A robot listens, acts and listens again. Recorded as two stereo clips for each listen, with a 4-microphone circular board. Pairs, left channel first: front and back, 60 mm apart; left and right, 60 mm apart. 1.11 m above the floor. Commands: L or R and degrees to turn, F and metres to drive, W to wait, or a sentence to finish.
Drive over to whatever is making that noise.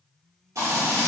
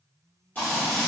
L150
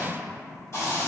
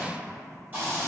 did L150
R35
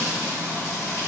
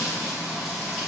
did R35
R10
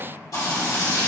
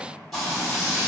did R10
F1.0
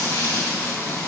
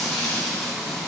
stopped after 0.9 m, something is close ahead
I am next to the frying.